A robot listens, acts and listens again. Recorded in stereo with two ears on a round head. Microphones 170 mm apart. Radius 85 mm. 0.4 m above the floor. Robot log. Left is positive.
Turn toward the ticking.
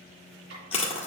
cmd idle
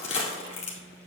cmd idle
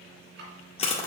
note: The ticking: about 60° right or 120° right.
cmd yaw -60
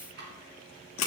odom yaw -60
note: So it is at 60° right.
cmd yaw -60
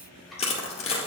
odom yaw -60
cmd idle
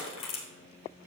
cmd idle
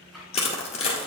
end: I heard ticking from this way, but can't make it out now.